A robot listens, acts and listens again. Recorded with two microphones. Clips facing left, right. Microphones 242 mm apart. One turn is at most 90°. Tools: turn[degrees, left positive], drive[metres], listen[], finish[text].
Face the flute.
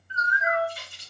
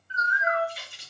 Action: turn[30]
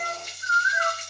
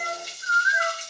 Thought: So it is at 15° right.
Action: turn[-15]
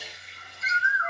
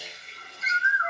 Action: listen[]
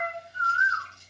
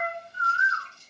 Action: finish[Found it: a flute, straight ahead.]